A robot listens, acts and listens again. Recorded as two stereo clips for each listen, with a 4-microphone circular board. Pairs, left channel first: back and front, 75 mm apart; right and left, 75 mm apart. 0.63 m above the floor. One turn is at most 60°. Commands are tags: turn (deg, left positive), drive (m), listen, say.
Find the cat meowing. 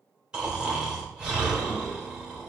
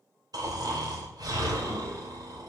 <listen/>
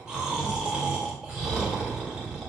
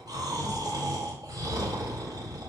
<listen/>
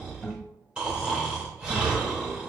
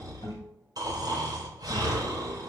<say>I can't make out a cat meowing, only snoring.</say>